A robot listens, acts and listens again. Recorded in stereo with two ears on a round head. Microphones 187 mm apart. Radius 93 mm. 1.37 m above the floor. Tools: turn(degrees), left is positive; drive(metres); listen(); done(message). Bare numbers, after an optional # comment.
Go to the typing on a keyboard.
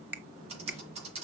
# The typing on a keyboard: about 30° right or 150° right.
turn(-30)
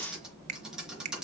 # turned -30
drive(1.0)
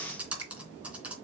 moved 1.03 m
drive(1.0)
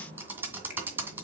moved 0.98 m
# The typing on a keyboard is now 10° right.
turn(-10)
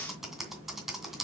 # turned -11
drive(1.0)
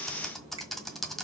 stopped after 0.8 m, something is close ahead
done("I am next to the typing on a keyboard.")